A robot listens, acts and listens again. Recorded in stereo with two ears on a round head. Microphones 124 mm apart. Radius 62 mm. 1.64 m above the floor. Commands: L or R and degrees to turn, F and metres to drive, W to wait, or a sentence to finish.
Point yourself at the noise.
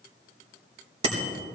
R45
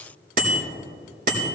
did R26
R110
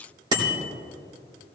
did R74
R35
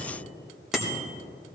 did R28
Facing the bicycle bell.